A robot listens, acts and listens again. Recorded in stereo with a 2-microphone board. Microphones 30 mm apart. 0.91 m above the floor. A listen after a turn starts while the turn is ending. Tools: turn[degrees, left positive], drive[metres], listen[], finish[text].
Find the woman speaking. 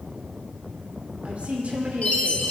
Thought: The woman speaking: about 50° right or 130° right.
Action: turn[-50]
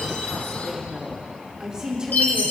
Thought: So it is at 25° right.
Action: turn[-25]
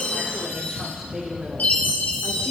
Thought: The woman speaking is now 25° right.
Action: turn[-25]
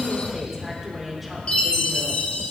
Action: finish[Found it: a woman speaking, straight ahead.]